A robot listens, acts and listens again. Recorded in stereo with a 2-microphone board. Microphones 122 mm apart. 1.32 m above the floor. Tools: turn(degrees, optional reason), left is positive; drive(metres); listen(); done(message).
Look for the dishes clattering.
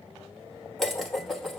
turn(degrees=30)
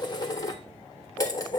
turn(degrees=150, reason="So it is at 150° left.")
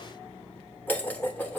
turn(degrees=15, reason="The dishes clattering is now 15° left.")
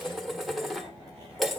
done("Found it: dishes clattering, straight ahead, 1 to 2 m away.")